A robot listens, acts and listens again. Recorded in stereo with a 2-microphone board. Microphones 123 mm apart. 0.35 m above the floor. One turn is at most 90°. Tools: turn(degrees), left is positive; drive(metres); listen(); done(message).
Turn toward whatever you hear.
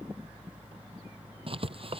turn(degrees=-45)
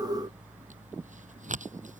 turn(degrees=-90)
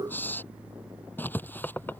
turn(degrees=15)
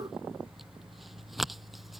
done("Found it: writing, straight ahead.")